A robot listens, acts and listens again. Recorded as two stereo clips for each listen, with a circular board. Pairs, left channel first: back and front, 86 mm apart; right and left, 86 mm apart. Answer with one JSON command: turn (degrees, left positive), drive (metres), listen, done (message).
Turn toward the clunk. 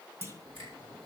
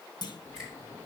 {"turn": -60}
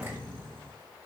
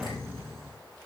{"done": "I heard a clunk from this way, but can't make it out now."}